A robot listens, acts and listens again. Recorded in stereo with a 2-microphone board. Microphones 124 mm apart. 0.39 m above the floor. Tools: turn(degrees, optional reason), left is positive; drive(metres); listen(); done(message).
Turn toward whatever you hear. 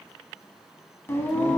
turn(degrees=15, reason="The singing: about 15° left or 165° left.")
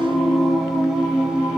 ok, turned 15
turn(degrees=-30)
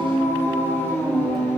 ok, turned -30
turn(degrees=15, reason="So it is at 15° left.")
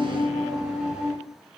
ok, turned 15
done("Found it: singing, straight ahead.")